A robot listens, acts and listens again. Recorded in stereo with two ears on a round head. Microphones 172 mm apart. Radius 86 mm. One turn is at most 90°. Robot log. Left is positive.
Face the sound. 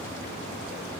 cmd idle
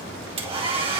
note: The hair dryer: about 30° right or 150° right.
cmd yaw -30
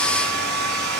note: So it is at 120° right.
cmd yaw -90
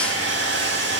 note: The hair dryer is now 60° right.
cmd yaw -60
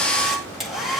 end: Found it: a hair dryer, straight ahead.